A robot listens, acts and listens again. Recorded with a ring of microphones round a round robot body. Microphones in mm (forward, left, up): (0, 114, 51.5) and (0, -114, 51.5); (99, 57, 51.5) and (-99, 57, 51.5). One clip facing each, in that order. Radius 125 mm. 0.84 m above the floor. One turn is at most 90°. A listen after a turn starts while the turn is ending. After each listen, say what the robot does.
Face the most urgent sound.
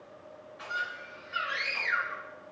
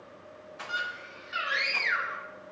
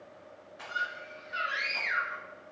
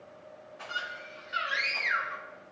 Turn 90° right.
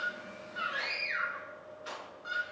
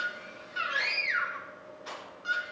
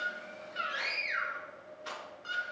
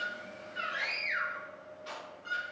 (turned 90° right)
Turn 40° right.
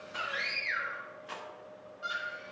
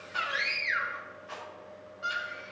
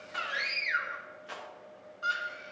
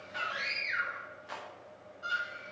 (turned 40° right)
Facing the scream, 2 to 4 m away.